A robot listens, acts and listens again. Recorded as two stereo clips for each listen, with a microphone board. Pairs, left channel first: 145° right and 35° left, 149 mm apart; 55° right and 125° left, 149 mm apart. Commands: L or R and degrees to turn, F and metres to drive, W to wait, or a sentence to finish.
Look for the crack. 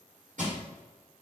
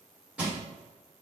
W
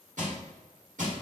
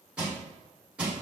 W
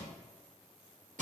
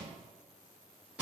I can't make out a crack, only crushing.